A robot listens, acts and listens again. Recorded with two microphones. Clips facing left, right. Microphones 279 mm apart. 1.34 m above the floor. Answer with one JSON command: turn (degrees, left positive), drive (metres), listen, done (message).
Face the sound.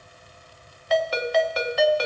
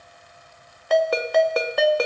{"turn": -55}
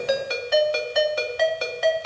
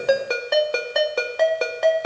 {"turn": -65}
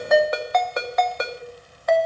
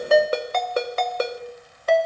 {"turn": -35}
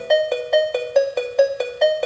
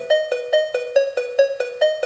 {"done": "Found it: a ringtone, straight ahead, under 1 m away."}